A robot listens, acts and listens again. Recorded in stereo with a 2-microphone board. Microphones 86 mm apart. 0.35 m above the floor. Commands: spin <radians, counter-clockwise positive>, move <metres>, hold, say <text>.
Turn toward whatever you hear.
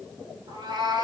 spin -0.96
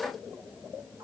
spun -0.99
hold
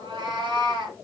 spin -1.22
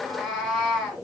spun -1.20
say Facing the cat meowing.